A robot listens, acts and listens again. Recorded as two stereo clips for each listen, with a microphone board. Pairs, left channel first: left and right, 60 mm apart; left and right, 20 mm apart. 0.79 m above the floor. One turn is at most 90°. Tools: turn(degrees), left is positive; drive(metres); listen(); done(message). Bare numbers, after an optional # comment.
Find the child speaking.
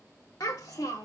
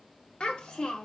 turn(90)
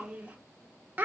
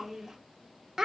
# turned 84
# So it is at 35° right.
turn(-35)
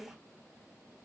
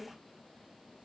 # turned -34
# The child speaking is now 10° right.
turn(-10)
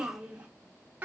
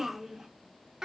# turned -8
# The child speaking is now 30° right.
turn(-30)
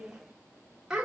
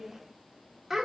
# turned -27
# The child speaking is now 10° right.
turn(-10)
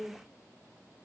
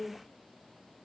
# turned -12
done("Found it: a child speaking, straight ahead.")